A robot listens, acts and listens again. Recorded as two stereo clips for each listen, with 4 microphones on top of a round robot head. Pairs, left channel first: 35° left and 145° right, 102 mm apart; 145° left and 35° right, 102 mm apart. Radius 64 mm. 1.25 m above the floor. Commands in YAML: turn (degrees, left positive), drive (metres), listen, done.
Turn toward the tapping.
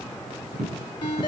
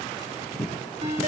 turn: -135
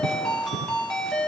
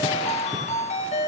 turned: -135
listen: true
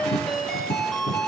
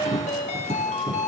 done: "Facing the tapping."